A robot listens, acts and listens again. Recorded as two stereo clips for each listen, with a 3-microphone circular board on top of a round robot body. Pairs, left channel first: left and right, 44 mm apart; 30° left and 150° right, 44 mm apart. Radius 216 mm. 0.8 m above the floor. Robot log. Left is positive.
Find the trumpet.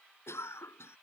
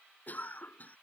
cmd idle
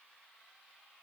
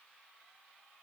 cmd idle
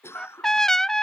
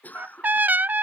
note: The trumpet: 165° left.
cmd yaw +165
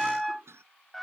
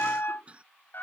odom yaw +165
end: Found it: a trumpet, straight ahead.